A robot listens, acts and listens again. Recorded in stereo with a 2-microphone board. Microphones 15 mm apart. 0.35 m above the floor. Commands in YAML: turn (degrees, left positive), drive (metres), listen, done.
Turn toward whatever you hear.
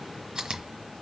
turn: -55
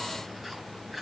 listen: true
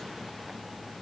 listen: true
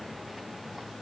done: "I heard chewing, but can't make it out now. It was about straight ahead or 70° right."